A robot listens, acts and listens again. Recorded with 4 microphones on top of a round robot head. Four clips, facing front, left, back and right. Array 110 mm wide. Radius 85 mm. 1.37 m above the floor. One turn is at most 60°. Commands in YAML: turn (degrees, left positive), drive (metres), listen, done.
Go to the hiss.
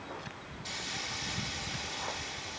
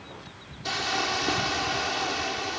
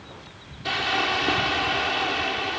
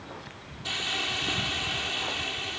turn: 60
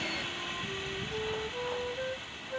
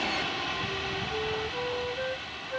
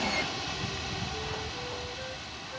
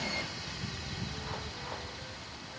turn: 60
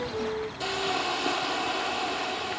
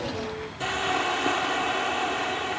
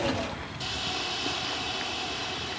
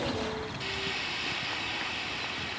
turn: 60
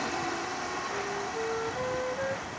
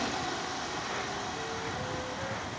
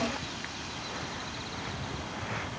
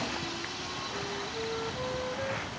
turn: 30
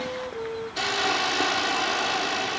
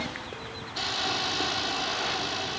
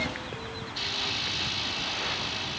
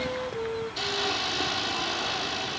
drive: 1.0
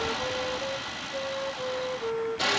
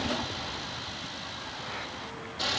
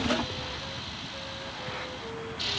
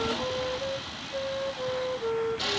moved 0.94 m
drive: 1.0
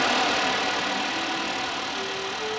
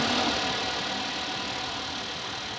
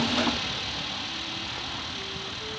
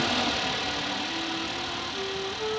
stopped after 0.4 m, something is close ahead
done: "Arrived at the hiss, straight ahead."